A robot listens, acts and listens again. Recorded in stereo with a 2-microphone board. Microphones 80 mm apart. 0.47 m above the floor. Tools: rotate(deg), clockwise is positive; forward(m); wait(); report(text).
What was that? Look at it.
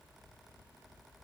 wait()
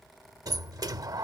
rotate(55)
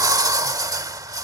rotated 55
rotate(60)
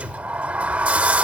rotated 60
rotate(20)
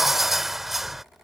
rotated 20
report("Found it: a sliding door, straight ahead.")